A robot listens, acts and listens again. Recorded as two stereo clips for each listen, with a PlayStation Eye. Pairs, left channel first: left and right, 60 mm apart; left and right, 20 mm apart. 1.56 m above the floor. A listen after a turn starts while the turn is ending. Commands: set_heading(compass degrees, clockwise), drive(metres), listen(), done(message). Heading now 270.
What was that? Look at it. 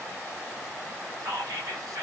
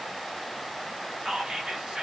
set_heading(0)
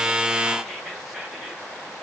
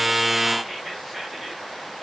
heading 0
done("Facing the whispering.")